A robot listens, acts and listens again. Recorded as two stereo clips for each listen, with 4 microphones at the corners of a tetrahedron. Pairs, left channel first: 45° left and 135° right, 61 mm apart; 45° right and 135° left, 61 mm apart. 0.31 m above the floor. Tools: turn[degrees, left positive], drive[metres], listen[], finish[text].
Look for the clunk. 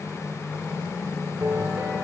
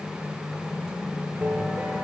Action: listen[]
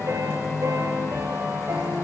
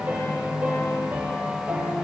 Action: listen[]
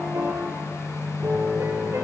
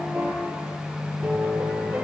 Action: finish[I can't make out a clunk, only a piano.]